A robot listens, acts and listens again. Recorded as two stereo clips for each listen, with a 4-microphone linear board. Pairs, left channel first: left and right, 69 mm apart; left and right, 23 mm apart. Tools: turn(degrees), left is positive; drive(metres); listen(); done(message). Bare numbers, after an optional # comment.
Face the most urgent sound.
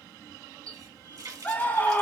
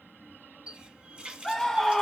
# The scream: about 25° left or 155° left.
turn(25)
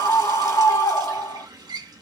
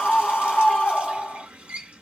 # So it is at 130° left.
turn(130)
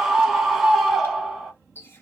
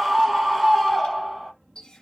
done("Facing the scream.")